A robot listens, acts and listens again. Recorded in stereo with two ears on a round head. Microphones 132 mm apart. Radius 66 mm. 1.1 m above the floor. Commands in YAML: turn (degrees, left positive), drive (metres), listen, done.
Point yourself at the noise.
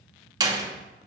turn: -25
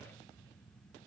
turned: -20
listen: true
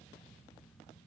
done: "I heard a door slam, but can't make it out now. It was about 5° right or 135° right."